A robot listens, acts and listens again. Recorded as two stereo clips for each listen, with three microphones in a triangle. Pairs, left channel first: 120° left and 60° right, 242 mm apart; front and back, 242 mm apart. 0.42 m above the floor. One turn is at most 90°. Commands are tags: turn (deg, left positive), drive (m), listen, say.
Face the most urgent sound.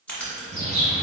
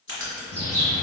<listen/>
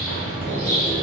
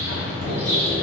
<listen/>
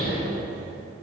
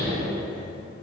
<say>I can't make out anything urgent to turn to.</say>